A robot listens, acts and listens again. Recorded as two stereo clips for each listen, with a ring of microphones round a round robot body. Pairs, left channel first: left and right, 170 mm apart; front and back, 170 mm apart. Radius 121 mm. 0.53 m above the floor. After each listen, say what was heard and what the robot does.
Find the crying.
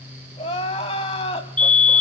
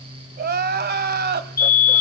The crying: 155° left. Turn 155° left.
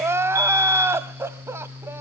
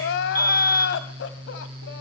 The crying is now 15° right. Turn 15° right.
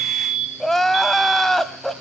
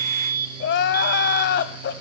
Found it: crying, straight ahead.